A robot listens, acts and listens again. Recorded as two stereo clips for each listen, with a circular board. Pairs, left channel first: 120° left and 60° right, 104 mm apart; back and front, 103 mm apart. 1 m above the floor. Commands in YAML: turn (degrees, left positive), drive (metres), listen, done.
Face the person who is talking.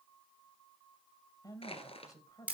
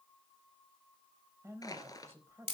turn: 65
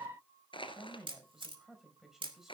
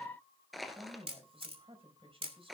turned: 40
turn: 25
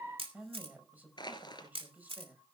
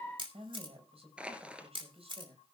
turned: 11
turn: 15
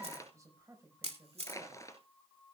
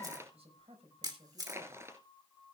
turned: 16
done: "Facing the woman speaking, over 4 m away."